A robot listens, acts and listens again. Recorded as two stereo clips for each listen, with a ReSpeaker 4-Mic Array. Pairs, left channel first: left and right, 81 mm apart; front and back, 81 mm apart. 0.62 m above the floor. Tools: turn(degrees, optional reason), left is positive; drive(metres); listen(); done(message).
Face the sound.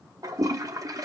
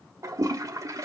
turn(degrees=-135, reason="The toilet flushing: 135° right.")
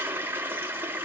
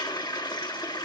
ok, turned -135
turn(degrees=-25, reason="The toilet flushing is now 25° right.")
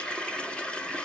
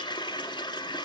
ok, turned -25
turn(degrees=15, reason="The toilet flushing is now 15° left.")
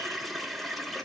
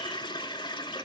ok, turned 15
done("Facing the toilet flushing, 1 to 2 m away.")